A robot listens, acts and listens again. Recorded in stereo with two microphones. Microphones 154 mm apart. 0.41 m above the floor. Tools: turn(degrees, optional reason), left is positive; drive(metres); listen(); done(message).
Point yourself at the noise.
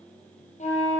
turn(degrees=55, reason="The flute: about 55° left or 125° left.")
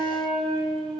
done("Found it: a flute, straight ahead, over 4 m away.")